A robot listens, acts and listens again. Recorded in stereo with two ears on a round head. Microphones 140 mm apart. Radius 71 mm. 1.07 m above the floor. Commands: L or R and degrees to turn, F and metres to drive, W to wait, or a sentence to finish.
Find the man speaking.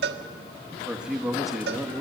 L30
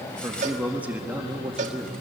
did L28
R30
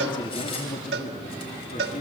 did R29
L40
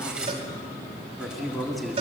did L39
Facing the man speaking.